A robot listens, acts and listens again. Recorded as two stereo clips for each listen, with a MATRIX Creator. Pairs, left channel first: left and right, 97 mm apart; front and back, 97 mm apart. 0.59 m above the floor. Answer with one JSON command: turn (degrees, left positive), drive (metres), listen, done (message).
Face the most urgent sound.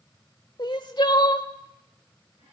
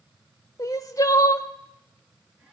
{"turn": 50}
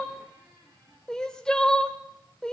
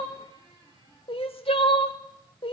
{"turn": 10}
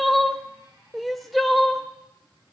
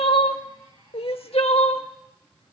{"done": "Facing the crying, under 1 m away."}